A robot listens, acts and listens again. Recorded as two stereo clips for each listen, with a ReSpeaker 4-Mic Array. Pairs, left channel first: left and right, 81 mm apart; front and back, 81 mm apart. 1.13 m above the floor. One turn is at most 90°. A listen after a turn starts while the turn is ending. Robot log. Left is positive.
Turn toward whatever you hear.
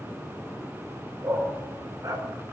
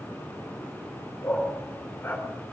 note: The dog barking: 65° right.
cmd yaw -65
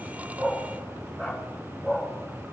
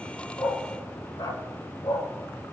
note: The dog barking is now 15° right.
cmd yaw -15
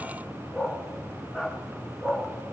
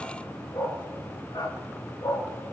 note: The dog barking is now 15° right.
cmd yaw -15
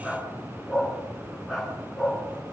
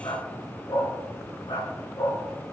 end: Found it: a dog barking, straight ahead.